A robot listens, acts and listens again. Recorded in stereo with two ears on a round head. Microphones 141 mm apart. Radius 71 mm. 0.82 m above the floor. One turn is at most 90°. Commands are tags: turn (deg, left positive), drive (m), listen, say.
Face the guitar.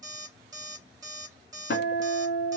<turn deg="65"/>
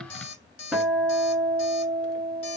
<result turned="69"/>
<say>Found it: a guitar, straight ahead.</say>